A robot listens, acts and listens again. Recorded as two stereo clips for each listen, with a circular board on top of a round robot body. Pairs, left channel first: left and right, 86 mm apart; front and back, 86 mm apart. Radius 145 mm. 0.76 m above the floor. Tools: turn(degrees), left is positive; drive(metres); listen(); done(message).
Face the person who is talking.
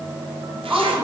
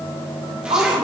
turn(degrees=-165)
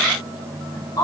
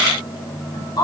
turn(degrees=45)
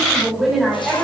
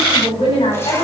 done("Facing the woman speaking, over 4 m away.")